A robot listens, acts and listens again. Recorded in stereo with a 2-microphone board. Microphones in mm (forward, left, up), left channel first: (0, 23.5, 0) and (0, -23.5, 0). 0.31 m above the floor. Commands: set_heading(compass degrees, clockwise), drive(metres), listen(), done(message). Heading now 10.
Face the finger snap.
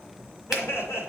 set_heading(40)
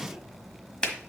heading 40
set_heading(20)
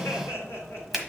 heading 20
done("Facing the finger snap, 1 to 2 m away.")